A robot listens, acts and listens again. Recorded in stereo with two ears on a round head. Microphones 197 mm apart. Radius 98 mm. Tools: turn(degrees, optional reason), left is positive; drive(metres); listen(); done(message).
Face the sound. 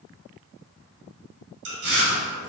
turn(degrees=-55, reason="The chewing: about 55° right or 125° right.")
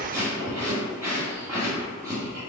turn(degrees=-15, reason="So it is at 15° right.")
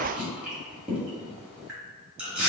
done("Found it: chewing, straight ahead, 1 to 2 m away.")